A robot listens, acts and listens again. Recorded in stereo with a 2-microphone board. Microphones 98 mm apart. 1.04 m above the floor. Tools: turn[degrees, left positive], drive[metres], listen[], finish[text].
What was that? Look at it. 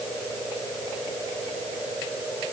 Action: listen[]
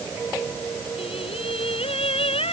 Action: turn[90]
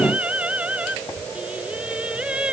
Thought: So it is at 10° right.
Action: turn[-10]
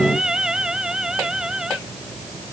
Action: finish[Found it: singing, straight ahead.]